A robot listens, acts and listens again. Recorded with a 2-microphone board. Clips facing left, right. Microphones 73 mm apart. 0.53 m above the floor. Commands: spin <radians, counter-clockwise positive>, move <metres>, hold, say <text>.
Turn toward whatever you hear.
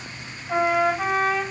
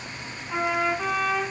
spin 1.05
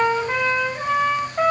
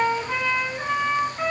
spin 1.05
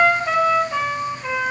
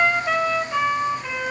say Found it: a trumpet, straight ahead, over 4 m away.